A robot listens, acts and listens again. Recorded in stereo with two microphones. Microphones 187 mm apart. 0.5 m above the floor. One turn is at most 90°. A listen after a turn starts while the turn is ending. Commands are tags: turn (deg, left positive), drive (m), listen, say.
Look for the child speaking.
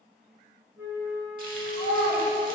<turn deg="20"/>
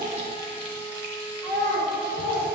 <turn deg="30"/>
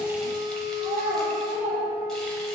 <turn deg="15"/>
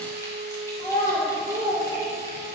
<turn deg="25"/>
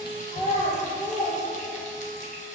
<turn deg="90"/>
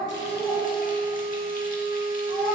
<turn deg="35"/>
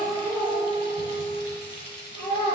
<turn deg="15"/>
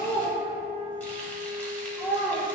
<say>Facing the child speaking.</say>